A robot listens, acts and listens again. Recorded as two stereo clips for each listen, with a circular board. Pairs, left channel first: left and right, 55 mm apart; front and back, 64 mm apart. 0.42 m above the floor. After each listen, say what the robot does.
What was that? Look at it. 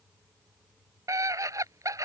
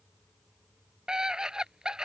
Turn 100° right.
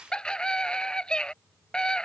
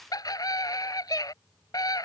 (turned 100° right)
Turn 15° left.
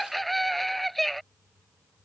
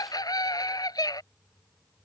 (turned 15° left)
Facing the scream.